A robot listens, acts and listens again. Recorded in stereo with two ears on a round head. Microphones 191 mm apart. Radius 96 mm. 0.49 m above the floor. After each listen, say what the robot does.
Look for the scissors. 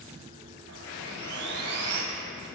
Keep listening.
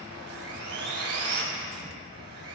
Keep listening.
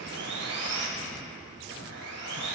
I can't make out scissors to turn to.